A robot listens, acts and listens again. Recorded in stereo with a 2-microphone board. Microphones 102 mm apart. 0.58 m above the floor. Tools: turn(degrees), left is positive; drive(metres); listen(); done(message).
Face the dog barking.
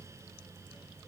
listen()
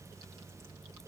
listen()
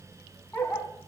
turn(degrees=20)
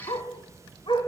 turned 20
turn(degrees=120)
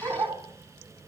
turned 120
turn(degrees=-35)
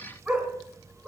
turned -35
done("Facing the dog barking.")